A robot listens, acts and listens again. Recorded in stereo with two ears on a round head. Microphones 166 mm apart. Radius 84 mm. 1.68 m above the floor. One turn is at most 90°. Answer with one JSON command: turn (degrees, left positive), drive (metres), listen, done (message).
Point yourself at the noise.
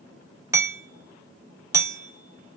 {"turn": -30}
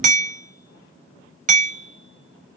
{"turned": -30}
{"turn": -90}
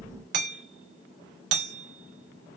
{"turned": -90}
{"turn": -65}
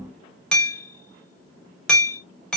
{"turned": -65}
{"done": "Found it: hammering, straight ahead, 1 to 2 m away."}